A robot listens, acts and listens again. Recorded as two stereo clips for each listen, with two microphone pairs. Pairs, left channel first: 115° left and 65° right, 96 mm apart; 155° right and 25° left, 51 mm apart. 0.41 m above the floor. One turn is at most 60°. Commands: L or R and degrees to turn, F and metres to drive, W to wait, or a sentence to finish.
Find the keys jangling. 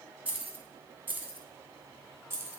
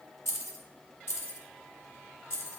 R60
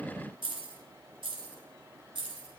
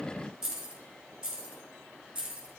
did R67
R50
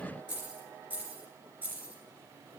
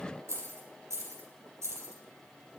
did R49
Found it: keys jangling, straight ahead.